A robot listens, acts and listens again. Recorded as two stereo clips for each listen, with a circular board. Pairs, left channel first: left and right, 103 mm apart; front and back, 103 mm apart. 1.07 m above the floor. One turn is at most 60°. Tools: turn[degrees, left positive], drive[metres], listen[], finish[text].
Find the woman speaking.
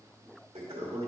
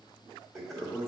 Action: listen[]
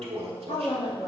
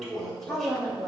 Thought: The woman speaking: 85° left.
Action: turn[60]
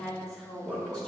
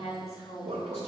Thought: The woman speaking is now 10° left.
Action: turn[10]
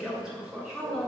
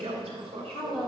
Thought: The woman speaking is now 10° left.
Action: turn[10]
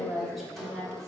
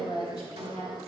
Action: finish[Facing the woman speaking, 2 to 4 m away.]